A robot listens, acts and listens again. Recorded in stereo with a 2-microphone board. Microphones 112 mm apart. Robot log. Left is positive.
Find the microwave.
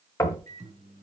note: The microwave: about 75° right or 105° right.
cmd yaw -75
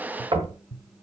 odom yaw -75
end: Facing the microwave.